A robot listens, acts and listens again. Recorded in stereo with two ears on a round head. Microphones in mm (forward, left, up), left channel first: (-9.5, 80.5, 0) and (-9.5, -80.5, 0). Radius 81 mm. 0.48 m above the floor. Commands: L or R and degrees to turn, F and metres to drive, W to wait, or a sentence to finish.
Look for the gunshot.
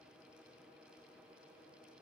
W
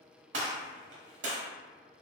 R90
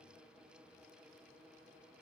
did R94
Facing where the gunshot came from. I can't hear it now.